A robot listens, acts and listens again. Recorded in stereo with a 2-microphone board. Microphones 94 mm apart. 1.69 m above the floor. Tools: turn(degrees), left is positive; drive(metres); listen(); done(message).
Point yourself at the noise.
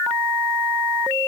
listen()
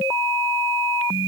listen()
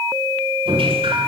turn(degrees=-90)
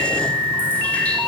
listen()
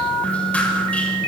listen()
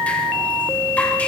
done("I heard dripping from this way, but can't make it out now.")